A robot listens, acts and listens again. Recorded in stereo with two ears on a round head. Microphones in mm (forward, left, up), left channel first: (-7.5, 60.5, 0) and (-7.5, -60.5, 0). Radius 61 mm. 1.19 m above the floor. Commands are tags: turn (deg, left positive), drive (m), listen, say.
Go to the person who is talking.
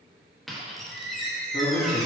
<turn deg="45"/>
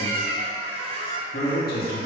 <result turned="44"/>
<turn deg="90"/>
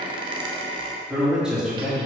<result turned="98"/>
<drive m="1.0"/>
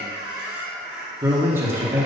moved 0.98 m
<turn deg="-20"/>
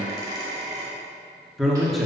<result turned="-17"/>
<drive m="1.0"/>
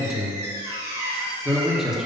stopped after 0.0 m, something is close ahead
<say>Arrived at the man speaking, straight ahead.</say>